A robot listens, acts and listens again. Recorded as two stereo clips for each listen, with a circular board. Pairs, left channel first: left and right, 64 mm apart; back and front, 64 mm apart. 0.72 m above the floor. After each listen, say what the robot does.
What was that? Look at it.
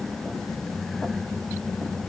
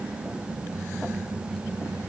Keep listening.
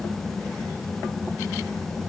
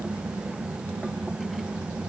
Keep listening.
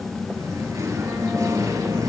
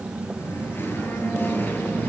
Turn 120° right.
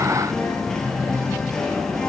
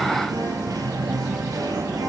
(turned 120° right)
Turn 10° left.
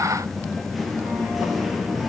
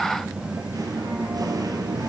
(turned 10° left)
Found it: singing, straight ahead, 2 to 4 m away.